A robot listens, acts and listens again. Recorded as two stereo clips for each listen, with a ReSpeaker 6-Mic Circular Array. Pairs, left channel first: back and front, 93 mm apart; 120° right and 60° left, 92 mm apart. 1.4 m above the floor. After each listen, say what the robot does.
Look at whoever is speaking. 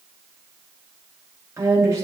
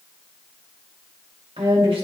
Turn 55° left.
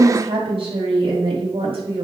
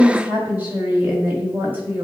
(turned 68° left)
Turn 10° right.
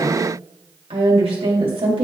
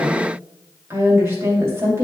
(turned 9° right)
Found it: a woman speaking, straight ahead, 2 to 4 m away.